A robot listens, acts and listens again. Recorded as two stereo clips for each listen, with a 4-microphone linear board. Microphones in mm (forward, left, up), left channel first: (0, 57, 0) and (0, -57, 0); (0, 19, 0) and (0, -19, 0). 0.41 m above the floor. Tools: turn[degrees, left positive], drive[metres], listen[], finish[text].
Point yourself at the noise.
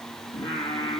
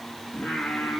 Thought: The singing: about 40° left or 140° left.
Action: turn[40]
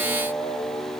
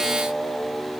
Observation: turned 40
Thought: So it is at 95° left.
Action: turn[95]
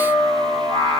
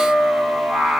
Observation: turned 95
Thought: The singing is now 35° right.
Action: turn[-35]
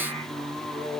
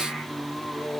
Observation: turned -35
Thought: The singing is now 10° left.
Action: turn[10]
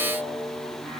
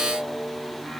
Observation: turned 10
Action: finish[Found it: singing, straight ahead.]